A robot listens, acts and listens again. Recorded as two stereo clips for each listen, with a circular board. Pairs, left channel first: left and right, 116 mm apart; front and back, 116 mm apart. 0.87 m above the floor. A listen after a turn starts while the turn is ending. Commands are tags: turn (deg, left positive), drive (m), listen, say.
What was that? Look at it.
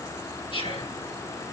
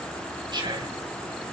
<turn deg="130"/>
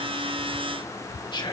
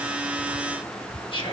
<turn deg="45"/>
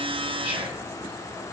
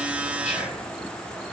<listen/>
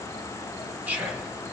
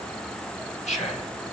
<turn deg="-10"/>
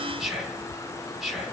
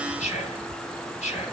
<say>Facing the whispering.</say>